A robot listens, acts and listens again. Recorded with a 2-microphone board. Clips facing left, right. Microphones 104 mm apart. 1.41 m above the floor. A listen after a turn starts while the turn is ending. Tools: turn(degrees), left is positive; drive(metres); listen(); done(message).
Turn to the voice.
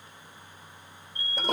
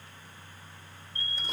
listen()
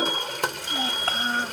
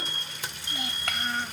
turn(degrees=35)
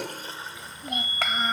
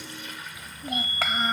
done("Found it: a child speaking, straight ahead.")